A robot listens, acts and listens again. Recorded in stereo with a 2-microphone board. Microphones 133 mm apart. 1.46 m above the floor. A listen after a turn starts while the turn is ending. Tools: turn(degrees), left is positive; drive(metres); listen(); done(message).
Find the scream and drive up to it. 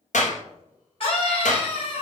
turn(degrees=45)
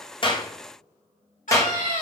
turn(degrees=90)
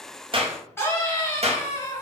turn(degrees=20)
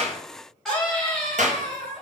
drive(metres=1.0)
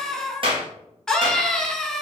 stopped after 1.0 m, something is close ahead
done("I am next to the scream.")